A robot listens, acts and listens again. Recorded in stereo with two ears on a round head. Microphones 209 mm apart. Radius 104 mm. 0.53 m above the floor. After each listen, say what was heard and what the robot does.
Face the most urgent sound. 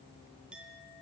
Keep listening.
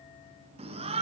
The shout: about 25° right or 155° right. Turn 25° right.
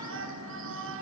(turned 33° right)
So it is at 120° right. Turn 120° right.
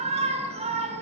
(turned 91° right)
The shout is now 25° right. Turn 25° right.
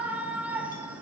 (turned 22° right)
Facing the shout, over 4 m away.